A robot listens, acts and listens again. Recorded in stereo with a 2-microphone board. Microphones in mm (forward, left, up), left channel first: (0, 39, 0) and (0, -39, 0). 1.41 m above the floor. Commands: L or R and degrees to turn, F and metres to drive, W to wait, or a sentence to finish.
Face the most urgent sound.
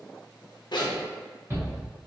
R30
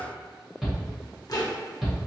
Facing the shout, 1 to 2 m away.